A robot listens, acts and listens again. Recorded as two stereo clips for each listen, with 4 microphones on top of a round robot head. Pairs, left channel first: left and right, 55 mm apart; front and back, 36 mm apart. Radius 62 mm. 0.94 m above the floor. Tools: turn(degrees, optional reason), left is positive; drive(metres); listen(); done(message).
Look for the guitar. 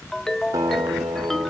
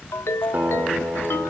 turn(degrees=-125, reason="The guitar: 125° right.")
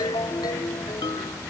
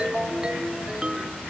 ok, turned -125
listen()
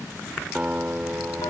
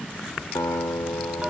turn(degrees=-20, reason="The guitar is now 20° right.")
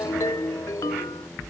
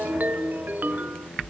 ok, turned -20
listen()
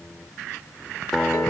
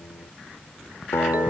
done("Facing the guitar.")